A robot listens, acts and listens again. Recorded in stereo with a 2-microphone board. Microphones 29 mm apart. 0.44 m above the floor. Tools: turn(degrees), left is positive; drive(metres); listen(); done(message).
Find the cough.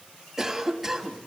turn(degrees=-30)
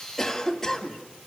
turn(degrees=20)
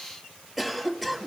done("Facing the cough.")